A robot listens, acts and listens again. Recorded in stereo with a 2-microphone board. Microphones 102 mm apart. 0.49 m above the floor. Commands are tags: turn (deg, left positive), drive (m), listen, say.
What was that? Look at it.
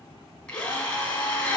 <turn deg="30"/>
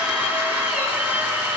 <turn deg="-20"/>
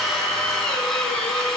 <say>Found it: a drill, straight ahead, 2 to 4 m away.</say>